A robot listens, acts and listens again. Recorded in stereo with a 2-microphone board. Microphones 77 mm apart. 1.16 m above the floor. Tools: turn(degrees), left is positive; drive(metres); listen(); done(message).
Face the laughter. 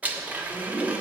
turn(degrees=45)
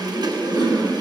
turn(degrees=95)
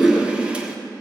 done("Facing the laughter, 2 to 4 m away.")